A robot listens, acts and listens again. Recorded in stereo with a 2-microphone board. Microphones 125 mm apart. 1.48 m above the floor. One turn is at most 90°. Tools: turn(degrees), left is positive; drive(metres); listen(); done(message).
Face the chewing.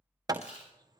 turn(degrees=60)
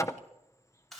done("Found it: chewing, straight ahead, over 4 m away.")